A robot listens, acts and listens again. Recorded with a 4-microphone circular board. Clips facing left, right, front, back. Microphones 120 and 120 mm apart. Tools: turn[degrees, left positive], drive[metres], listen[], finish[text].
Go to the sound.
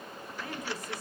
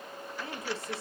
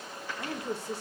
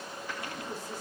Thought: The woman speaking: 25° right.
Action: turn[-25]
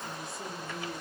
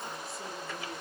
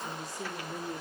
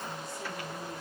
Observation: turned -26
Action: drive[1.0]
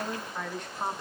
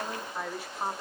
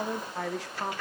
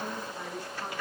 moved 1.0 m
Action: drive[1.0]
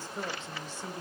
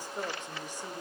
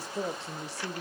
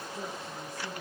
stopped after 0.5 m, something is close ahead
Thought: The woman speaking is now 10° right.
Action: turn[-10]
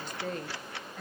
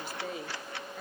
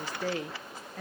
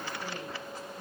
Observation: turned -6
Action: finish[Arrived at the woman speaking, straight ahead.]